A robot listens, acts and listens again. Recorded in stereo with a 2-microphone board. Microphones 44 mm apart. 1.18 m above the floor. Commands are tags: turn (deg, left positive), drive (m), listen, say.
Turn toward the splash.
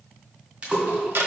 <turn deg="-25"/>
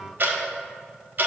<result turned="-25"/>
<listen/>
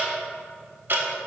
<say>I heard a splash, but can't make it out now. It was about straight ahead or 130° right.</say>